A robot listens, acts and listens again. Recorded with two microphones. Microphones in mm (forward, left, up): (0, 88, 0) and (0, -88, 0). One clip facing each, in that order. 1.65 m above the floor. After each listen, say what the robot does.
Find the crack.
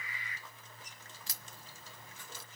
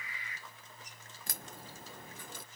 Turn 55° right.
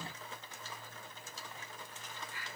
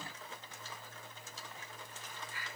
Keep listening.
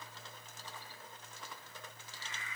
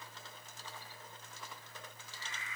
I heard a crack, but can't make it out now. It was about straight ahead or 70° right.